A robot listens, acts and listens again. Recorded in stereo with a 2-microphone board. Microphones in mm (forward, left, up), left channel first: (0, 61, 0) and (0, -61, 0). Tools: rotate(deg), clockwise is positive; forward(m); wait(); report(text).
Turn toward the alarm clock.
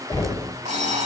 rotate(90)
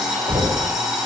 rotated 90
report("Found it: an alarm clock, straight ahead, 2 to 4 m away.")